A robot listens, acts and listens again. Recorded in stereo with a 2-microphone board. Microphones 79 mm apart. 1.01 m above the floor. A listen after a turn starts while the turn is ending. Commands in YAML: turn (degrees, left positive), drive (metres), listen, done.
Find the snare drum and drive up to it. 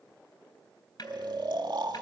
turn: 60
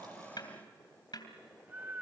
turn: 60
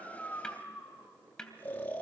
turn: 10
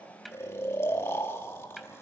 drive: 1.0
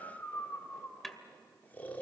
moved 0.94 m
drive: 1.0
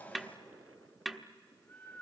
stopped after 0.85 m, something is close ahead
done: "I am next to the snare drum."